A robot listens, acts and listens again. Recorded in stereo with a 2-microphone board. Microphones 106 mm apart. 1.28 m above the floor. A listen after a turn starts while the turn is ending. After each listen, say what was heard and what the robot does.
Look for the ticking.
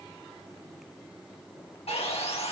Keep listening.
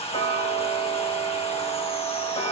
The ticking: about 70° left or 110° left. Turn 70° left.
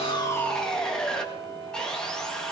So it is at 40° left. Turn 40° left.
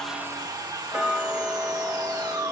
Found it: ticking, straight ahead.